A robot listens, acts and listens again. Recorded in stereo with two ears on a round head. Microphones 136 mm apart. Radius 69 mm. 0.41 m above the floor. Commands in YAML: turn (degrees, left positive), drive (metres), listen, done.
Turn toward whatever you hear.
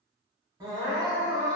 turn: -25
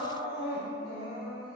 done: "Found it: crying, straight ahead."